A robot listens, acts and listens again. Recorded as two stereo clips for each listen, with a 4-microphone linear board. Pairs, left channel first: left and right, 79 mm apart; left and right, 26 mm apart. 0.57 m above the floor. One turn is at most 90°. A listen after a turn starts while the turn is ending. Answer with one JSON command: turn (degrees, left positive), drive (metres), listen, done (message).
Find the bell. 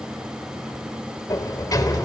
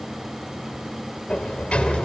{"listen": true}
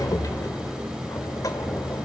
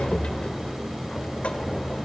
{"listen": true}
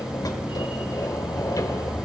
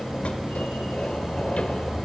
{"done": "I can't make out a bell, only a sliding door."}